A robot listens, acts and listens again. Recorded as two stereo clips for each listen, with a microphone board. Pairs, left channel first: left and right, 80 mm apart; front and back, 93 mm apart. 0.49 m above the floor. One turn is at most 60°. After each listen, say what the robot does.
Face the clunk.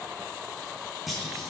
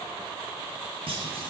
Turn 60° left.
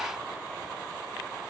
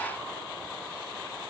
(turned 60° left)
Turn 60° left.
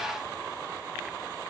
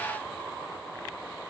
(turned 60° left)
Turn 60° left.
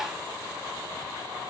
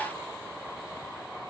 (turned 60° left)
Facing where the clunk came from. I can't hear it now.